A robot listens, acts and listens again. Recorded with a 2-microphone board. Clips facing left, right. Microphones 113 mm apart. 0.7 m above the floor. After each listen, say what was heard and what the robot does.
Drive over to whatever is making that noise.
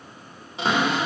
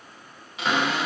The cupboard door: about 35° left or 145° left. Turn 35° left.
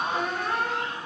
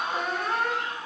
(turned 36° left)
Drive 1.0 m forward.
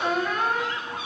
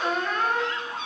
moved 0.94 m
The cupboard door is now 10° left. Turn 10° left.
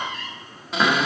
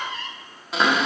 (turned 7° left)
Drive 1.0 m forward.
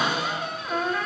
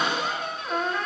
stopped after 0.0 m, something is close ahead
Arrived at the cupboard door, straight ahead.